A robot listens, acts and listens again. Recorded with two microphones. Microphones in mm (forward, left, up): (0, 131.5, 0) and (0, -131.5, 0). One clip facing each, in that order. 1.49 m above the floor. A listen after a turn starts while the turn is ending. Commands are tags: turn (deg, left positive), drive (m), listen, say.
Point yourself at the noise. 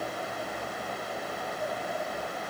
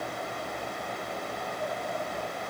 <listen/>
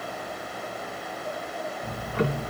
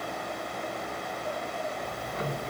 <turn deg="75"/>
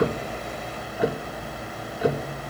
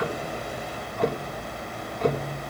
<say>Found it: ticking, straight ahead.</say>